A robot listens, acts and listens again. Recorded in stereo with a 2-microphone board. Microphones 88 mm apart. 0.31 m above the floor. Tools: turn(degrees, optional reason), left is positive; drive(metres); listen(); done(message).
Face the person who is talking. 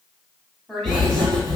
turn(degrees=30)
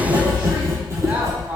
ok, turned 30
listen()
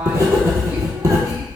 listen()
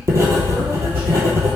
done("I heard a woman speaking, but can't make it out now. It was about 25° right or 145° left.")